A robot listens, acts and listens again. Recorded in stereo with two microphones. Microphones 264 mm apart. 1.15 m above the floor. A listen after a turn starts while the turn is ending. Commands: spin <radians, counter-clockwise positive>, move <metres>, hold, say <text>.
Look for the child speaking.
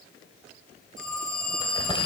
hold
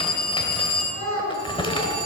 spin -1.13
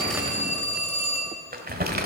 hold
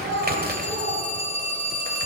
spin -0.87
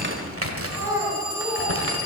spin -0.17
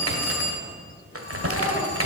hold
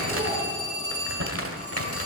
hold
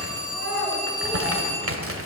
say Facing the child speaking.